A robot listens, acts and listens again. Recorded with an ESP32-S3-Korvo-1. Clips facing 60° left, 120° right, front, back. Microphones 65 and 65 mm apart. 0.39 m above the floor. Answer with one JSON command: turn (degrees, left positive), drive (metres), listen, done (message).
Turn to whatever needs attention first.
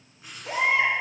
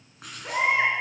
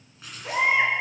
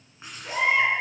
{"turn": -65}
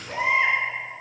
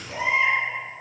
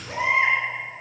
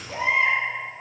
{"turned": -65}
{"turn": 10}
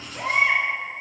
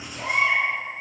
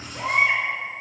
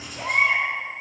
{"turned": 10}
{"done": "Found it: a baby crying, straight ahead, 2 to 4 m away."}